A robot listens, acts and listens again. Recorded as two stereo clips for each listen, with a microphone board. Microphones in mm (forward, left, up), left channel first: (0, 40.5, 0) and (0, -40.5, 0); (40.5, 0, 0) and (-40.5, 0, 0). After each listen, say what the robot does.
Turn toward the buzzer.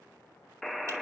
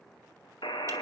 Found it: a buzzer, straight ahead.